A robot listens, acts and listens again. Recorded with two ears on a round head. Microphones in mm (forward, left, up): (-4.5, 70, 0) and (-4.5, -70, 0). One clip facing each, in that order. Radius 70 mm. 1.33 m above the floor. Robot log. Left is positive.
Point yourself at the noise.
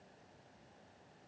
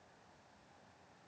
cmd idle
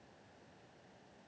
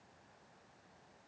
cmd idle
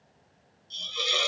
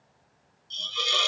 cmd yaw +30
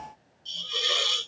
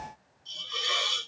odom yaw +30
note: So it is at 140° left.
cmd yaw +140
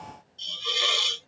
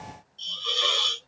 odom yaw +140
note: The hiss is now 15° left.
cmd yaw +15
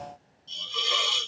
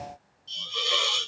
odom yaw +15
end: Found it: a hiss, straight ahead.